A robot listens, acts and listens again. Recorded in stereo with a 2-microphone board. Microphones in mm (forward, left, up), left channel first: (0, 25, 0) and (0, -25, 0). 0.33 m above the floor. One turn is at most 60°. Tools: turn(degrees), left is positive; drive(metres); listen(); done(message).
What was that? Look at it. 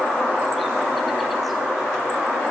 listen()
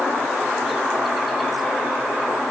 listen()
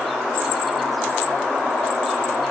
done("I can't make out anything.")